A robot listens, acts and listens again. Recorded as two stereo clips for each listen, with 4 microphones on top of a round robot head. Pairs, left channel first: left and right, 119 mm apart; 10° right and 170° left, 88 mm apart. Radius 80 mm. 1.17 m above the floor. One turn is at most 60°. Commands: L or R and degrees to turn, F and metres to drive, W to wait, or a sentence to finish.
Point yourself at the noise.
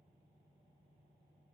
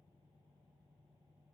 W
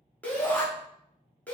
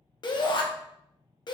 L10
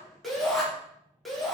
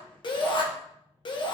Found it: a shout, straight ahead.